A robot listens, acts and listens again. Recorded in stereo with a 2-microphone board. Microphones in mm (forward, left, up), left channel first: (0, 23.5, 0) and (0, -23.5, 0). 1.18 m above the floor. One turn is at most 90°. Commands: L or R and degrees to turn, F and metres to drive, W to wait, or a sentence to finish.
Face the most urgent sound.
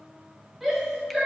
L30
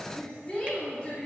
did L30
L90
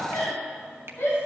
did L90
L65
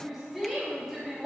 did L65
Facing the shout.